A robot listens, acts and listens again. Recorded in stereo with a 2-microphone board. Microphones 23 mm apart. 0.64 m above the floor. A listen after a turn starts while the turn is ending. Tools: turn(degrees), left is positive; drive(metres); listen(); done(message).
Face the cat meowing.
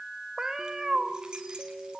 turn(degrees=-30)
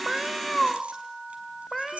done("Facing the cat meowing.")